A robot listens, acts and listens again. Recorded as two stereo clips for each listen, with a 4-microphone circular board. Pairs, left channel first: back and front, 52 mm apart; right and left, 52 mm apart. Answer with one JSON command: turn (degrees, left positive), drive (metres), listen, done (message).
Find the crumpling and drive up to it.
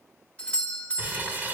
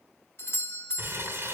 {"turn": 55}
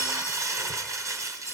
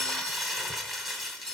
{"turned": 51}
{"drive": 1.0}
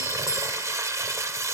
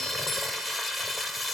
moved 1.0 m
{"drive": 1.0}
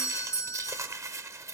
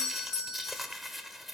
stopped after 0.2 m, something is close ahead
{"done": "I am next to the crumpling."}